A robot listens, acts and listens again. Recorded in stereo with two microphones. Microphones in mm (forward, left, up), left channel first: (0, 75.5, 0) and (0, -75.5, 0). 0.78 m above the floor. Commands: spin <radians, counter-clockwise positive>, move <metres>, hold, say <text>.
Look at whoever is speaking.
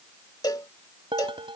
hold
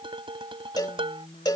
spin 0.79
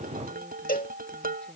say Found it: a woman speaking, straight ahead.